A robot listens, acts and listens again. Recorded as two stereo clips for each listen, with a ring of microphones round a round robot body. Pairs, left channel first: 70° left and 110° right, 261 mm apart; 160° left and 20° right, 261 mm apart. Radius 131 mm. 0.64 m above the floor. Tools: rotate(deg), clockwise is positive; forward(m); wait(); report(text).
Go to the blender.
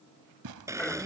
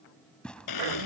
rotate(-170)
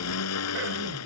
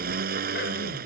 rotate(-35)
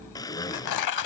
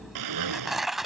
rotate(10)
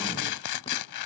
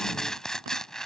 wait()
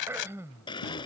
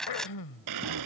forward(1.0)
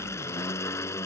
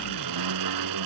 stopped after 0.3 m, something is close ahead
rotate(15)
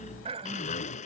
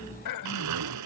report("Something is in my way. I am facing the blender but have not reached it.")